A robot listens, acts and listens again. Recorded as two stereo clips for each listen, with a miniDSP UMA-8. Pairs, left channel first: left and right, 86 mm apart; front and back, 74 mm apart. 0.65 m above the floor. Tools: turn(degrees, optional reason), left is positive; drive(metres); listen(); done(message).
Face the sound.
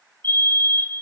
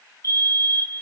turn(degrees=30, reason="The fire alarm: 30° left.")
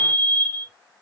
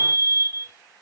turn(degrees=20, reason="The fire alarm is now 20° left.")
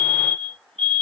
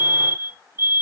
done("Facing the fire alarm, 2 to 4 m away.")